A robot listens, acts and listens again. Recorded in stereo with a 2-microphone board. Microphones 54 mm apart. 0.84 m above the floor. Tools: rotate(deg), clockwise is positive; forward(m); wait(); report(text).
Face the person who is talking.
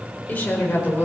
rotate(-30)
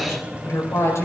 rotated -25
rotate(-120)
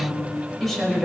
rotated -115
report("Found it: a woman speaking, straight ahead, over 4 m away.")